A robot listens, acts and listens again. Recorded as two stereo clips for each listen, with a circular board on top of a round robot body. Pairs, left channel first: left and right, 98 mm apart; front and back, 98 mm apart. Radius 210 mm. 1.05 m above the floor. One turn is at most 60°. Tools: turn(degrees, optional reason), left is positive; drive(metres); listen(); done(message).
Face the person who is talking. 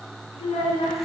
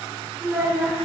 turn(degrees=60, reason="The child speaking: 105° left.")
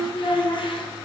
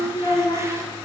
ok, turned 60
turn(degrees=45, reason="The child speaking is now 45° left.")
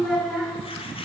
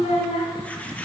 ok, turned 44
done("Found it: a child speaking, straight ahead, 1 to 2 m away.")